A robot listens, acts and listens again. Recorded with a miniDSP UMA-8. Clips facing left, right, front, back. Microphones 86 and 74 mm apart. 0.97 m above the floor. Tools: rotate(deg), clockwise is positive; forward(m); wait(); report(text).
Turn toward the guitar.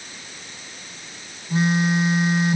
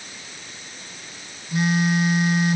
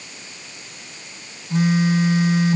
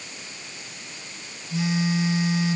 wait()
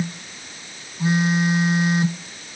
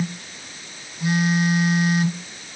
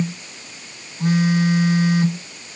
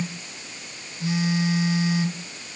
wait()
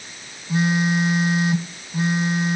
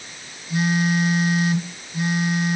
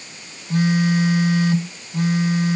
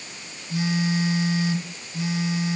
report("I can't make out a guitar to turn to.")